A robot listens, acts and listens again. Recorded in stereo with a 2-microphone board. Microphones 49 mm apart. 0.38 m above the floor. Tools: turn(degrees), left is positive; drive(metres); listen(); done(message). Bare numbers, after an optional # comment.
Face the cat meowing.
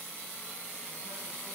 listen()
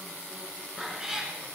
turn(-30)
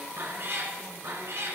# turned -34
# So it is at 115° right.
turn(-115)
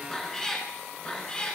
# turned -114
# The cat meowing is now 20° left.
turn(20)
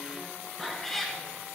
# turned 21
done("Found it: a cat meowing, straight ahead.")